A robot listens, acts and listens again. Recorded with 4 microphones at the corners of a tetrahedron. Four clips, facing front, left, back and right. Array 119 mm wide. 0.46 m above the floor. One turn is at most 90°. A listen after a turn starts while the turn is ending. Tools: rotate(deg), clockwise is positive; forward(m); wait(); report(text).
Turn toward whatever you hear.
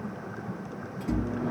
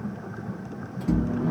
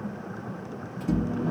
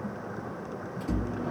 rotate(-90)
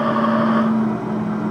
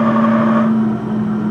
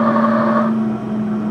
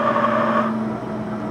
rotate(-10)
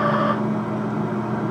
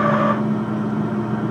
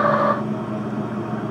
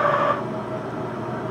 report("Facing the microwave.")